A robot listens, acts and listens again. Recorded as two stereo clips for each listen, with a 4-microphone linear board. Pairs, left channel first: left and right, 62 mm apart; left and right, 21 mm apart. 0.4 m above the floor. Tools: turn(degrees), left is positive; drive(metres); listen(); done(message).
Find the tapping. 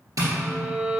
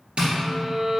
turn(degrees=-90)
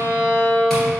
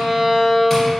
listen()
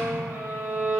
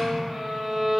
listen()
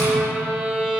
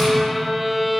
done("I heard tapping from this way, but can't make it out now.")